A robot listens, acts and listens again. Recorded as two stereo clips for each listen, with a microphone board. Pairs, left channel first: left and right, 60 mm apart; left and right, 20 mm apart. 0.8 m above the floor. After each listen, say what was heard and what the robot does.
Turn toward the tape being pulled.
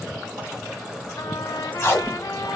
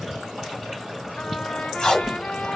The tape being pulled: about 45° left or 135° left. Turn 45° left.
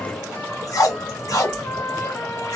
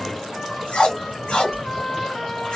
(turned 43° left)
So it is at 90° left. Turn 90° left.
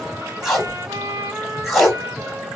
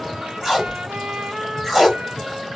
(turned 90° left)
Found it: tape being pulled, straight ahead.